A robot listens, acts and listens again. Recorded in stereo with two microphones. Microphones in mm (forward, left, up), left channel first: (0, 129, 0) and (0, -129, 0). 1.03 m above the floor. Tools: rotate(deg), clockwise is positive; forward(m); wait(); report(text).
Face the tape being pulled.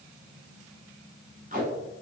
rotate(30)
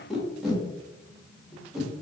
report("Found it: tape being pulled, straight ahead.")